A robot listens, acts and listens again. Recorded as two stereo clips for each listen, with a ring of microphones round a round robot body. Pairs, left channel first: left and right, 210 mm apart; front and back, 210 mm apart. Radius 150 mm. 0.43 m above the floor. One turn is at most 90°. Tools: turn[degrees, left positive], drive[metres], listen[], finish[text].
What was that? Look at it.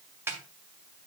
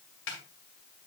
Thought: The snare drum: 15° right.
Action: turn[-15]
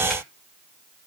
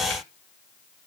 Action: listen[]
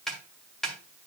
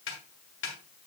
Action: finish[Found it: a snare drum, straight ahead.]